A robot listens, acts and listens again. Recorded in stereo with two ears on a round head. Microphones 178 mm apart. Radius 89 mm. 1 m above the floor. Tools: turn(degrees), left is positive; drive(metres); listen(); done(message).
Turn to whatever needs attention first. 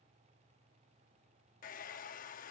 listen()
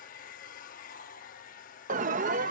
turn(degrees=-40)
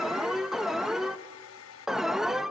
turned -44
done("Found it: an alarm, straight ahead, under 1 m away.")